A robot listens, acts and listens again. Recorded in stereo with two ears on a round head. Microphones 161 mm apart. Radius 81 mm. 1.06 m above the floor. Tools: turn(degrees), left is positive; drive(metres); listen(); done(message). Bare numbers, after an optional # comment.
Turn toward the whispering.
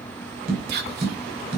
# The whispering: about 60° right or 120° right.
turn(-60)
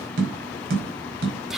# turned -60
done("Facing the whispering, 2 to 4 m away.")